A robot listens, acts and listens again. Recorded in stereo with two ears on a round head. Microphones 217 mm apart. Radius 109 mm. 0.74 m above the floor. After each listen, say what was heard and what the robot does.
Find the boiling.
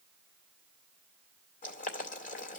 The boiling: about 35° left or 145° left. Turn 35° left.
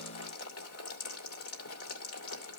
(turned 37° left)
So it is at 105° left. Turn 105° left.
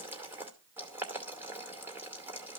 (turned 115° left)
The boiling is now 10° right. Turn 10° right.
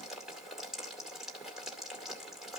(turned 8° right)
Found it: boiling, straight ahead, 2 to 4 m away.